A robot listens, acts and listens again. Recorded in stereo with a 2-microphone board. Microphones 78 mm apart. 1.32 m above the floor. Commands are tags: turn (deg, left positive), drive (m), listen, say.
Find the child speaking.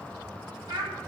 <turn deg="-90"/>
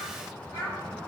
<turn deg="35"/>
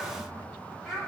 <say>Facing the child speaking.</say>